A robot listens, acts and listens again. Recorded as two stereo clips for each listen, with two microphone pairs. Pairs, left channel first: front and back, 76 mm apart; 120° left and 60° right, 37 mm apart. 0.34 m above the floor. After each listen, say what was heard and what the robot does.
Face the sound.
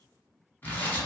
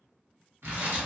The tearing paper: 60° right. Turn 60° right.
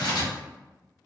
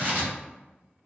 The tearing paper is now 15° right. Turn 15° right.
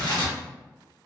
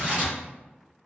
Facing the tearing paper.